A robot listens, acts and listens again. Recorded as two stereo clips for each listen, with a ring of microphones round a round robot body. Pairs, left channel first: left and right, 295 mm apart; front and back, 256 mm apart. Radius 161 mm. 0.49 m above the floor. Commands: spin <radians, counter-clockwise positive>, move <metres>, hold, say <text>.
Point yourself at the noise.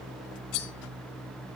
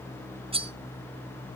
spin 1.92
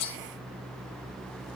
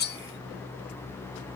spin 0.96
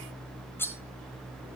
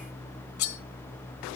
say Facing the cutlery clinking, 1 to 2 m away.